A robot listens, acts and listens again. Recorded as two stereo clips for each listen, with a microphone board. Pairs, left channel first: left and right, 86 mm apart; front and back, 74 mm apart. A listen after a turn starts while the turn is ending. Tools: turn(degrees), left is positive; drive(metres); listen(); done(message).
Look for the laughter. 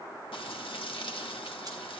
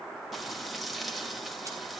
listen()
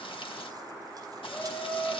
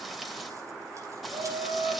turn(degrees=160)
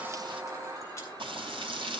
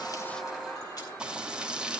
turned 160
listen()
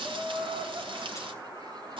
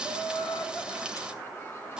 turn(degrees=-50)
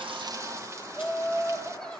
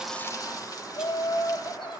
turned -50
turn(degrees=15)
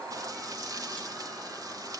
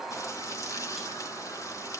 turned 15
listen()
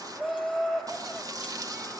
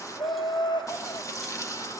done("Facing the laughter.")